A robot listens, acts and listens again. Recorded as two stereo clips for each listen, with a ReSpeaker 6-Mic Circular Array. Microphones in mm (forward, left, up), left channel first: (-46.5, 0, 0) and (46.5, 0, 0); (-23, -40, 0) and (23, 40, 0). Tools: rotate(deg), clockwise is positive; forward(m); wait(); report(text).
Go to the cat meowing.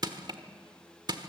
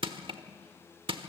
wait()
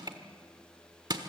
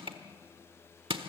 wait()
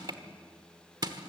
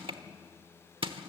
report("I can't make out a cat meowing to turn to.")